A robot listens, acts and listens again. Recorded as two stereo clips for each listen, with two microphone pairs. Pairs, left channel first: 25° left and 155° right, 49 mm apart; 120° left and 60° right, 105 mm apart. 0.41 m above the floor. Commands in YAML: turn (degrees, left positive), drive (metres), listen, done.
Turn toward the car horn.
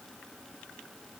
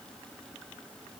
listen: true
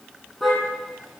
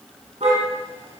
turn: -75
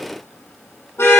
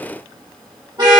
turn: -10
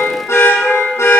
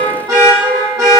done: "Found it: a car horn, straight ahead."